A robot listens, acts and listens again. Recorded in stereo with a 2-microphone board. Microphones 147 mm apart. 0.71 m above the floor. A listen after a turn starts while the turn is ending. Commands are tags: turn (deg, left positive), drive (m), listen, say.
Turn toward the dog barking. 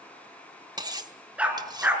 <turn deg="-30"/>
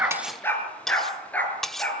<turn deg="10"/>
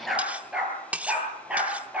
<turn deg="-10"/>
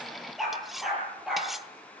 <say>Facing the dog barking, over 4 m away.</say>